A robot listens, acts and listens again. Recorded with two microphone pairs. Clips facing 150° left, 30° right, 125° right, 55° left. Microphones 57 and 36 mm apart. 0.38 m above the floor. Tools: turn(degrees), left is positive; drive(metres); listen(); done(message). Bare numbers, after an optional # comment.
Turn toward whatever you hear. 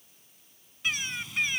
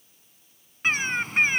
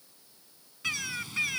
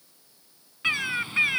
done("Found it: a bird, straight ahead.")